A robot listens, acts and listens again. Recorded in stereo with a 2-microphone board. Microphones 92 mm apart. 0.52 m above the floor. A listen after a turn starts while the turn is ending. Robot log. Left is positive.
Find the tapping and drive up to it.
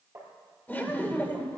note: The tapping: about 30° right or 150° right.
cmd yaw -30
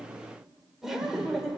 cmd idle
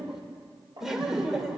note: So it is at 120° right.
cmd yaw -120
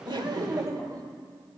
cmd idle
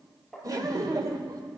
cmd fwd 1.0
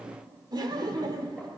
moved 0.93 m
cmd idle
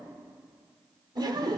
cmd idle
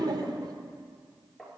cmd fwd 1.0
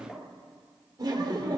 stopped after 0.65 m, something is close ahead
cmd idle
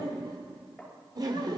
end: Something is in my way. I am facing the tapping but have not reached it.